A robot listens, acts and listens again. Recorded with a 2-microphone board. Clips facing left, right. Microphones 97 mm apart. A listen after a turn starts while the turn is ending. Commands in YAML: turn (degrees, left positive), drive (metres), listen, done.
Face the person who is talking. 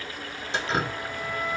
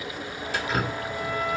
listen: true
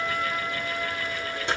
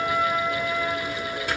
listen: true
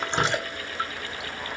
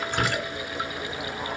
done: "I can't make out anyone speaking to turn to."